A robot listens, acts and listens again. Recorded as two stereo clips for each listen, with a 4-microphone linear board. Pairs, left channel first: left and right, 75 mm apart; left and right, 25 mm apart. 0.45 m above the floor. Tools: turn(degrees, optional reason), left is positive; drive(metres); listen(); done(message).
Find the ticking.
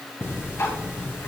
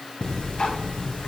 turn(degrees=40, reason="The ticking: about 40° left or 140° left.")
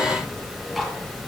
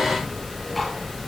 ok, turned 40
done("Found it: ticking, straight ahead.")